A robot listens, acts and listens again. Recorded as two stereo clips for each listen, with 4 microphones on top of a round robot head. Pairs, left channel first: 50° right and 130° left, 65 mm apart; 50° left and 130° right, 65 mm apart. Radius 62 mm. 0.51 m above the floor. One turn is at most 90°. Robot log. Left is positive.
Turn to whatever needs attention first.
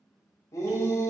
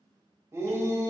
note: The shout: 85° right.
cmd yaw -85
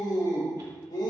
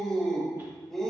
note: The shout is now 35° right.
cmd yaw -35
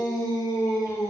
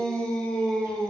note: The shout is now 25° right.
cmd yaw -25
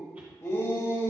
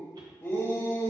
end: Facing the shout.